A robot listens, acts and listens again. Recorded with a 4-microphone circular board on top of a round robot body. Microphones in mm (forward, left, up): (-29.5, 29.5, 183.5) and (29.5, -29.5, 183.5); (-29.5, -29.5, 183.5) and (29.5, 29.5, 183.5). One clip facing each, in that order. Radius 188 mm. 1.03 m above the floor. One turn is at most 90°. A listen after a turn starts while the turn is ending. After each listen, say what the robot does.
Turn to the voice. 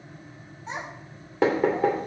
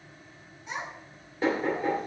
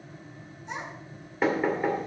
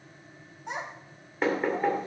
Turn 75° left.
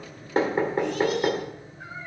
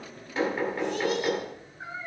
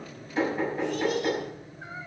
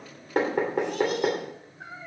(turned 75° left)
Turn 25° left.
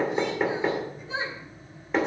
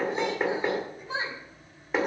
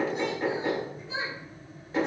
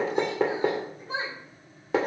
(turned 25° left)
Found it: a child speaking, straight ahead.